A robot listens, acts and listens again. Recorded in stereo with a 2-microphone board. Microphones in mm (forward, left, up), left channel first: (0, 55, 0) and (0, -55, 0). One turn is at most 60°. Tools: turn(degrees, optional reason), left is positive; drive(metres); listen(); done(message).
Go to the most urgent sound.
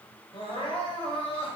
turn(degrees=55, reason="The crying: about 55° left or 125° left.")
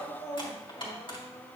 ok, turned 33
turn(degrees=30, reason="So it is at 30° left.")
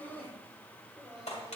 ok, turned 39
turn(degrees=-10, reason="The crying is now 10° right.")
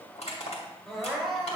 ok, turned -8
drive(metres=1.0)
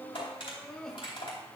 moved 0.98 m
drive(metres=1.0)
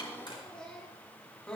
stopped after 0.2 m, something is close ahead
turn(degrees=10, reason="The crying is now 10° left.")
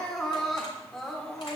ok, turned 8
done("Arrived at the crying, straight ahead.")